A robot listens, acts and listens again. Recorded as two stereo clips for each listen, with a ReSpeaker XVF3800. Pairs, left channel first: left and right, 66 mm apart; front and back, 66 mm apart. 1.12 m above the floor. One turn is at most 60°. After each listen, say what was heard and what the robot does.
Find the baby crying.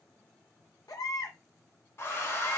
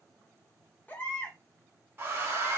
The baby crying: 65° left. Turn 60° left.
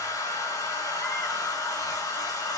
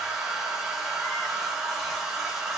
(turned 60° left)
Keep listening.
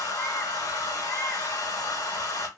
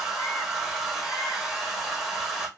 Keep listening.
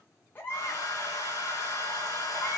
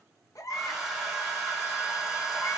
The baby crying is now 30° left. Turn 30° left.
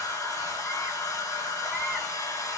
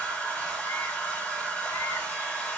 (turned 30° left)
Keep listening.
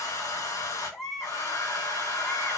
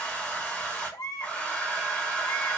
Found it: a baby crying, straight ahead, under 1 m away.